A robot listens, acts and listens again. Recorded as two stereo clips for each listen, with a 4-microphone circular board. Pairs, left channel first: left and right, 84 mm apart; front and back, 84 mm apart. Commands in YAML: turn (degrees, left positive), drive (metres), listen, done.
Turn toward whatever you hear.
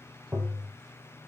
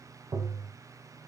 turn: -160
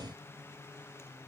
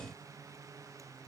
listen: true
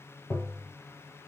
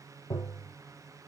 turn: 30
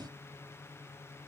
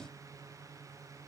listen: true
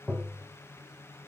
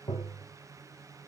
done: "Found it: tapping, straight ahead, under 1 m away."